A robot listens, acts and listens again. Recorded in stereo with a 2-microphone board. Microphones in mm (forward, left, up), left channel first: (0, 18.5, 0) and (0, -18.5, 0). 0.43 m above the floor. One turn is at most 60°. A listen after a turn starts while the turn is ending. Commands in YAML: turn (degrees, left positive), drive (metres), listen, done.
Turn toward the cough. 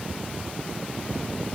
listen: true
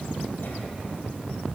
listen: true
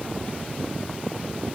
done: "I can't make out a cough to turn to."